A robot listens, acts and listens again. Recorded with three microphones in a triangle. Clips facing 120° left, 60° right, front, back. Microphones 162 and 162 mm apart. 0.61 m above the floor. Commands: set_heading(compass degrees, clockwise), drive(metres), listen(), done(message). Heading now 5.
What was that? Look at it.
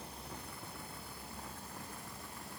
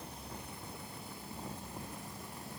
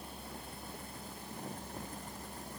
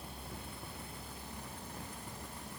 listen()
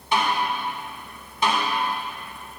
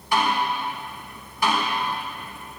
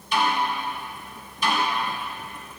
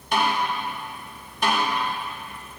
set_heading(180)
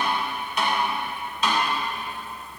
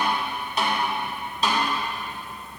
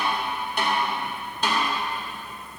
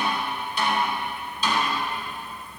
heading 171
set_heading(181)
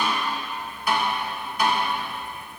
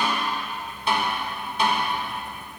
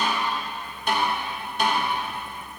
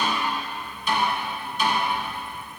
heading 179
done("Found it: a snare drum, straight ahead, 2 to 4 m away.")